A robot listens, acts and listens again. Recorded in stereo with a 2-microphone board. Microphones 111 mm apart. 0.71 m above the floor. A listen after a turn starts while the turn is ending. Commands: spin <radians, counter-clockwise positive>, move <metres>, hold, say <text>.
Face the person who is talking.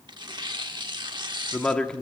spin 0.52
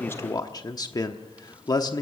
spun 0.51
spin 2.44
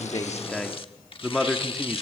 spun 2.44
say Found it: a man speaking, straight ahead, 1 to 2 m away.